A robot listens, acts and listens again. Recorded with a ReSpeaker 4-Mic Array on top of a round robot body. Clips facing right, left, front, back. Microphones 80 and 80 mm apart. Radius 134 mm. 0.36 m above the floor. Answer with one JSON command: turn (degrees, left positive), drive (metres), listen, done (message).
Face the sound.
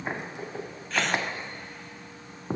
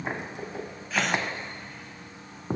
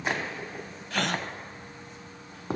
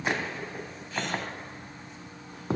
{"done": "Found it: a gasp, straight ahead, 2 to 4 m away."}